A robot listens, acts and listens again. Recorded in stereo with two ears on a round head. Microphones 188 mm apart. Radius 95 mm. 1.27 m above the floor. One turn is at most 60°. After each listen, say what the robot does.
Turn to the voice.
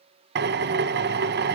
Keep listening.
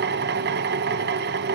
Keep listening.
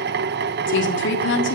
Turn 55° left.
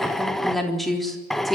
Facing the woman speaking.